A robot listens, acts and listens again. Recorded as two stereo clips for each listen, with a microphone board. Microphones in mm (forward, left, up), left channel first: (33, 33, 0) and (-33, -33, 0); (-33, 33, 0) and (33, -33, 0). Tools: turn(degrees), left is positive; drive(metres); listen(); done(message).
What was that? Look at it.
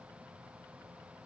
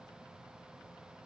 listen()
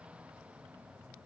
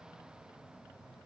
listen()
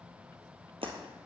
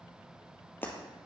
turn(degrees=-155)
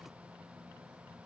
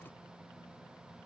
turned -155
done("Facing where the breaking glass came from. I can't hear it now.")